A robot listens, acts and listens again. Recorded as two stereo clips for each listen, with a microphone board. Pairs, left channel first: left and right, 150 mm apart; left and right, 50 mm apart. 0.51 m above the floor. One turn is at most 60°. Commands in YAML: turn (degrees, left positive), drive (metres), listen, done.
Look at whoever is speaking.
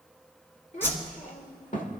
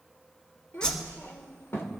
turn: 60
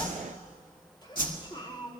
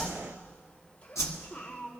turn: 35
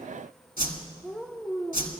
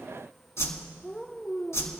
done: "Found it: a child speaking, straight ahead."